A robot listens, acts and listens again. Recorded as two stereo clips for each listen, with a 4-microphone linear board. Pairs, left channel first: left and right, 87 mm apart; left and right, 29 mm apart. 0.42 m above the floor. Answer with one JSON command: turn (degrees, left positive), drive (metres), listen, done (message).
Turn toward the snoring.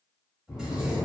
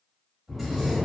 {"turn": 20}
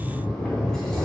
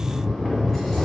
{"done": "Found it: snoring, straight ahead."}